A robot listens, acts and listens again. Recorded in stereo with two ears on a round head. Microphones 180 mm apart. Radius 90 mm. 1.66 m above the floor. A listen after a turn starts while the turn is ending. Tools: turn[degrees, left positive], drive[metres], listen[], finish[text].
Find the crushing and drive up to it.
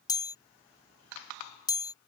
Action: listen[]
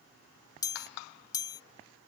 Action: listen[]
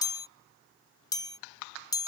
Action: finish[I can't make out crushing to turn to.]